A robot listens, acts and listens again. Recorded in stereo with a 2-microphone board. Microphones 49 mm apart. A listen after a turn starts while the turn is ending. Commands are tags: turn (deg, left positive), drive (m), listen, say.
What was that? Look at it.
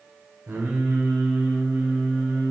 <turn deg="-50"/>
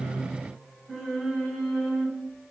<say>Facing the singing.</say>